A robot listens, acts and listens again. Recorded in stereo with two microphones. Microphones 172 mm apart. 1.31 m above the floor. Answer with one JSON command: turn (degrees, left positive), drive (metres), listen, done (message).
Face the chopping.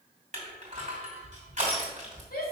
{"listen": true}
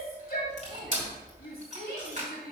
{"listen": true}
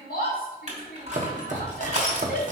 {"turn": -50}
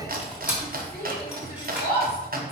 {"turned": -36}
{"turn": -85}
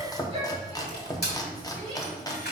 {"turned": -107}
{"turn": 25}
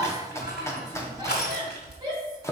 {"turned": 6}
{"turn": 20}
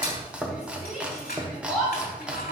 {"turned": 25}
{"done": "Found it: chopping, straight ahead."}